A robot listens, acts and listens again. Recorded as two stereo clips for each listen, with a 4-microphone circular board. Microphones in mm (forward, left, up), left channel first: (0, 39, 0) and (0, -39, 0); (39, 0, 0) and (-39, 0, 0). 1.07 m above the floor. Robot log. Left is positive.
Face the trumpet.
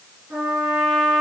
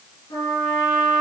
note: The trumpet: 15° right.
cmd yaw -15
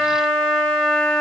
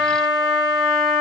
end: Found it: a trumpet, straight ahead.